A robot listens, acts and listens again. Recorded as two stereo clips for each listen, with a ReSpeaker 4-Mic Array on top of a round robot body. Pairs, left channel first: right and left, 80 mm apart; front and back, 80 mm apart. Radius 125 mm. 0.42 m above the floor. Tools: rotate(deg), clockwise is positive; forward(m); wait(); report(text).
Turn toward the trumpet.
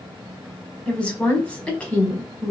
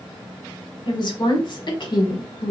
wait()
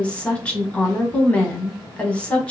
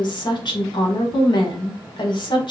wait()
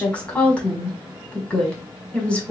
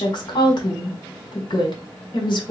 report("I can't make out a trumpet, only a woman speaking.")